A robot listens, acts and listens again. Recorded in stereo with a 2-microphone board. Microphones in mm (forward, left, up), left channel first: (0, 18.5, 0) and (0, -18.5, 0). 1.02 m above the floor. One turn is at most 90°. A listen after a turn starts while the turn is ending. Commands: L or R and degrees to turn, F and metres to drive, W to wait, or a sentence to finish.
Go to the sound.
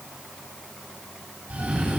R40
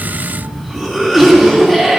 F1.0
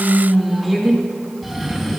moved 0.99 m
F1.0
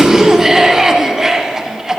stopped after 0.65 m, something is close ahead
R15
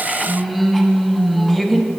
Arrived at the cough, straight ahead.